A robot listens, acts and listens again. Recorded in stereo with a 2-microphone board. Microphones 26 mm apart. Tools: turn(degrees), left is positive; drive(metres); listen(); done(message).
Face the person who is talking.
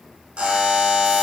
listen()
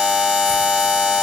listen()
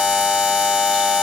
done("I can't make out anyone speaking to turn to.")